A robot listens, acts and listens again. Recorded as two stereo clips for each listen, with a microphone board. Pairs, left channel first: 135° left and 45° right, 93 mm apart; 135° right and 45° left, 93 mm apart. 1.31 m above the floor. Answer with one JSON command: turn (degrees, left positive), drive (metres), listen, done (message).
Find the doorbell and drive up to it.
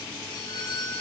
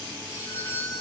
{"turn": 160}
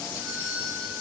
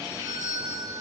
{"drive": 1.0}
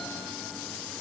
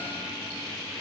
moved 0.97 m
{"listen": true}
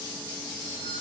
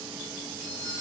{"drive": 1.0}
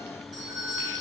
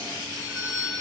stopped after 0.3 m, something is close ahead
{"done": "Blocked. The doorbell is further on, straight ahead."}